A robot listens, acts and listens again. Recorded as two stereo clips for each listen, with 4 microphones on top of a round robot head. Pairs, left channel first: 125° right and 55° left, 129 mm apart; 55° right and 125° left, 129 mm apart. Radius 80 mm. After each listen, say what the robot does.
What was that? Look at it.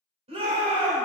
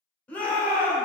Turn 25° left.
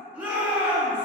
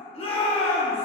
Turn 25° right.
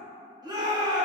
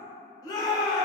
Found it: a shout, straight ahead, 1 to 2 m away.